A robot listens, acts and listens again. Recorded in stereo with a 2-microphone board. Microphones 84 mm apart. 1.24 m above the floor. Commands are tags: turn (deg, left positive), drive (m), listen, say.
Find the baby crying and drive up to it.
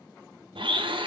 <listen/>
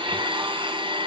<listen/>
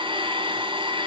<say>I can't make out a baby crying, only a blender.</say>